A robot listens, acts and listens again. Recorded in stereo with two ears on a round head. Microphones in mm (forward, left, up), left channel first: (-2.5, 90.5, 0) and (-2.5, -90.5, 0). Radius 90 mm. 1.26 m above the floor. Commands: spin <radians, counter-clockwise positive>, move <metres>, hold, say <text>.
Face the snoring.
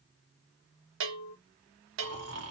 spin -1.13
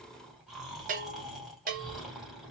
say Facing the snoring, 1 to 2 m away.